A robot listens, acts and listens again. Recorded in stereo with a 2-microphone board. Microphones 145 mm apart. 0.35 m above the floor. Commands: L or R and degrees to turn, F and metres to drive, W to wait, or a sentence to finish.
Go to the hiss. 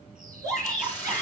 L30
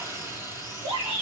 R20
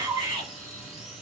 W
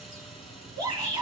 W
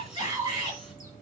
Facing where the hiss came from. I can't hear it now. I did not reach it.